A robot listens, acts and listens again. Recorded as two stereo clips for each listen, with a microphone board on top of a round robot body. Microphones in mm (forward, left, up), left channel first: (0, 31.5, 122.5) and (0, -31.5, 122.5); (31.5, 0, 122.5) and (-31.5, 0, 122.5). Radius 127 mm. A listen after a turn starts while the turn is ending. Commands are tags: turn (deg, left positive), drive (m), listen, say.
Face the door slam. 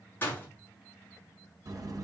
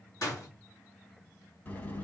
<turn deg="30"/>
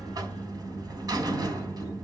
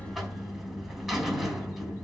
<say>Facing where the door slam came from. I can't hear it now.</say>